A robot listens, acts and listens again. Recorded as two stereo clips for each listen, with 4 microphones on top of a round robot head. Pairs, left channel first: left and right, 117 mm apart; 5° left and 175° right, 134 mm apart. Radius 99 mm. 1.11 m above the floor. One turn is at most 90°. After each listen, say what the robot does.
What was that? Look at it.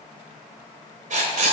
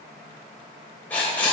Turn 75° right.
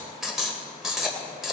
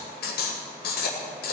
Found it: writing, straight ahead.